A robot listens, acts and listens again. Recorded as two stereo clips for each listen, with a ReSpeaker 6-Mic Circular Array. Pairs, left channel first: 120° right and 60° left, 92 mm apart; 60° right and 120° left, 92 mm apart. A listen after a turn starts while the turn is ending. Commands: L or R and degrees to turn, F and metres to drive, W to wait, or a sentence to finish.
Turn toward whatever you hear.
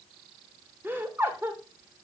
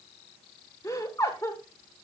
Facing the laughter.